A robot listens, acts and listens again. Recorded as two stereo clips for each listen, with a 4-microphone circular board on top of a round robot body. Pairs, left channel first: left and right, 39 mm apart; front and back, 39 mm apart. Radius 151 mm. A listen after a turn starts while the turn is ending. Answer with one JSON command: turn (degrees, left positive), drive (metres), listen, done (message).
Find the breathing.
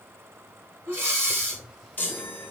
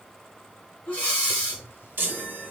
{"turn": -55}
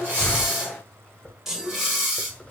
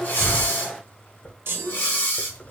{"done": "Found it: breathing, straight ahead, 2 to 4 m away."}